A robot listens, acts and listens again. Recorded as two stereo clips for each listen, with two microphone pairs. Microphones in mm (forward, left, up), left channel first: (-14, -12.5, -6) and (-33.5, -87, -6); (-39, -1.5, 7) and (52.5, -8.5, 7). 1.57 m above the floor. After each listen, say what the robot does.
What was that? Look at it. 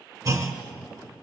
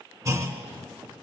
Turn 55° right.
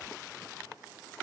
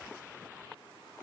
I heard a clunk from this way, but can't make it out now.